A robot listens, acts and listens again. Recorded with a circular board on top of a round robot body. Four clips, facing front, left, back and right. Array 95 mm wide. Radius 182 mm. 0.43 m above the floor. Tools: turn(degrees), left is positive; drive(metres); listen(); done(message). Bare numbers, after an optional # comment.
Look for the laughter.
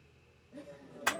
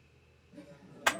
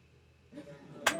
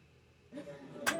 # The laughter: 120° right.
turn(-120)
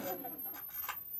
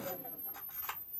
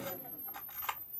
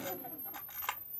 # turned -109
# Nothing new. It was at 10° right.
turn(-10)
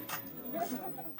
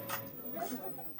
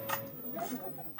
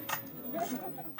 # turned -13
# The laughter is now 50° right.
turn(-50)
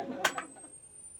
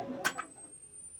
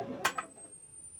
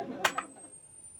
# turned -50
# The laughter is now 20° right.
turn(-20)
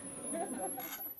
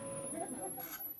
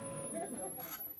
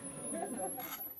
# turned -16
listen()
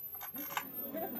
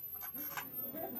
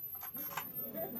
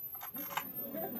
listen()
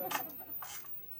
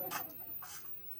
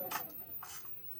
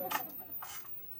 done("I heard laughter from this way, but can't make it out now.")